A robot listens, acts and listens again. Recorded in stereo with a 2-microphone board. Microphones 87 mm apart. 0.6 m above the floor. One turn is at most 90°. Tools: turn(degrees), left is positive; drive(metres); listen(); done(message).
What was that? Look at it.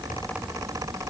listen()
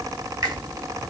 turn(degrees=-45)
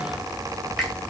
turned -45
done("Facing the finger snap.")